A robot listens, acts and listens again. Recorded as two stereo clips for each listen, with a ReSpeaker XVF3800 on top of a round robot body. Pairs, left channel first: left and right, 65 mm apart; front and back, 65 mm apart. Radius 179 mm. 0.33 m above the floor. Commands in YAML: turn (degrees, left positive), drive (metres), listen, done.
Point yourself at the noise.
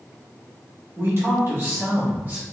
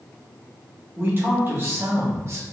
turn: -145
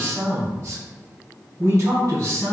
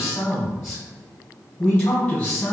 turn: -55
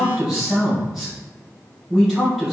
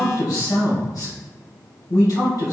done: "Found it: a man speaking, straight ahead."